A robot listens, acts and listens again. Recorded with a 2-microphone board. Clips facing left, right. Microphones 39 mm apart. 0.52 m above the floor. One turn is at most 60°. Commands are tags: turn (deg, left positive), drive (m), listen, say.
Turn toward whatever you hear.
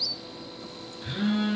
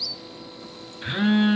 <turn deg="-45"/>
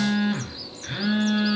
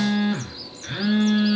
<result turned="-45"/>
<say>Found it: a phone buzzing, straight ahead.</say>